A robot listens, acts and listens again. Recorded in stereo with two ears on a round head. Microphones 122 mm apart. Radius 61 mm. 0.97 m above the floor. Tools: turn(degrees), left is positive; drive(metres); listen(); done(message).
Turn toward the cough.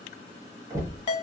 listen()
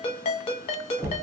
listen()
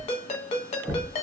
done("I can't make out a cough to turn to.")